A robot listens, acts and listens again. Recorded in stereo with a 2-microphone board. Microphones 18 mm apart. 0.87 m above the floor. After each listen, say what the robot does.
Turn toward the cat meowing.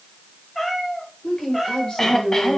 Turn 25° left.
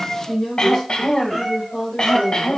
Turn 20° left.
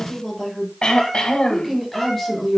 Turn 20° left.
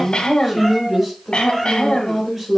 Found it: a cat meowing, straight ahead.